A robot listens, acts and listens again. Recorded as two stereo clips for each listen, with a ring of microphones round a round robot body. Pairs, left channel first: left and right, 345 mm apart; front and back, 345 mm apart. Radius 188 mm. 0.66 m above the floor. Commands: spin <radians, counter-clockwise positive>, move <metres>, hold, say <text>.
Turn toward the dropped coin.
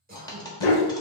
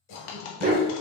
spin 0.17
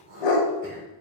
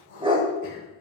say I heard a dropped coin from this way, but can't make it out now.